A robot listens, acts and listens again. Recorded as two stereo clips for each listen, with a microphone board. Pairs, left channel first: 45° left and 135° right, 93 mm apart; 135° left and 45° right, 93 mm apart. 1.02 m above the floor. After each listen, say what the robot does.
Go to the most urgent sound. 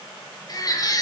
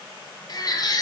Turn 90° left.
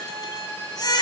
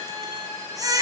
Drive 1.0 m forward.
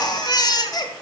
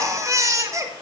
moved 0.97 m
Drive 1.0 m forward.
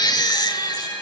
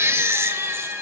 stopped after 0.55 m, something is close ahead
Turn 15° left.
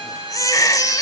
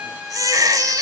Arrived at the baby crying, straight ahead.